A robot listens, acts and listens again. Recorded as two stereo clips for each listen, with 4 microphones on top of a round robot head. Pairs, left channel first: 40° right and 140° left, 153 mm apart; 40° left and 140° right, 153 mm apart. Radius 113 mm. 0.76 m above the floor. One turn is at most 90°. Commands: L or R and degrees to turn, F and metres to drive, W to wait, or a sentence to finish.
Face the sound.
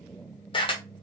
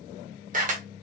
R90
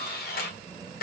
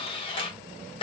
R15
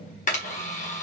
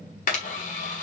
Found it: a camera shutter, straight ahead, 1 to 2 m away.